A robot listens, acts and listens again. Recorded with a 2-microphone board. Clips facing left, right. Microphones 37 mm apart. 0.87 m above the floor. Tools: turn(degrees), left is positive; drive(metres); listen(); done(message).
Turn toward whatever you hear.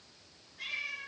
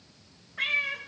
turn(degrees=-65)
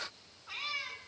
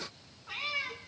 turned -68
done("Facing the cat meowing.")